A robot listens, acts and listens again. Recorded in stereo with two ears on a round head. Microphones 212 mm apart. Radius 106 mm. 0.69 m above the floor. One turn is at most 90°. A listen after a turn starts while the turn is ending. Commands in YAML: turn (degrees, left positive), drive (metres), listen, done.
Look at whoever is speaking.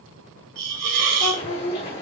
turn: 50
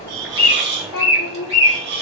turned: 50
turn: 70
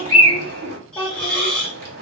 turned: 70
turn: 15
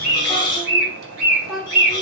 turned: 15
done: "Facing the child speaking."